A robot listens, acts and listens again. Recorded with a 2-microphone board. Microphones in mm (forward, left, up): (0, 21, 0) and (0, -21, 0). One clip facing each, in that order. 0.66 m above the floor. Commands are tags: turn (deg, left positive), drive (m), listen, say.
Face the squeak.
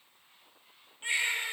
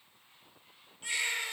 <listen/>
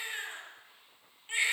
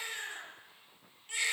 <listen/>
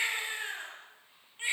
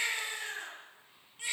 <say>I can't make out a squeak, only a baby crying.</say>